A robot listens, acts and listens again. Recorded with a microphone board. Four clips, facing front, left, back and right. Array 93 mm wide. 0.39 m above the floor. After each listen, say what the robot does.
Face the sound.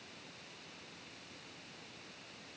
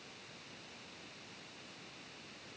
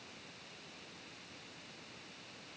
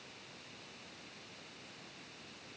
Keep listening.
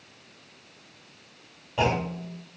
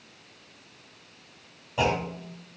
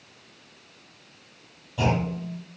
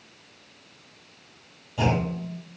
Turn 30° left.
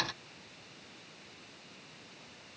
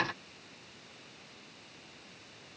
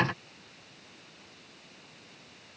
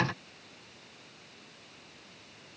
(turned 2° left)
Turn 25° left.
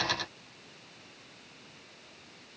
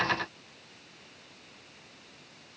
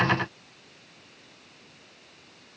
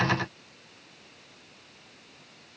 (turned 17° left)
Turn 10° left.
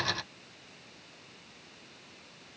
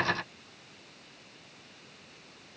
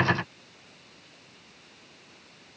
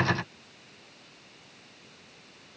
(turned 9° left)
I heard a clunk from this way, but can't make it out now.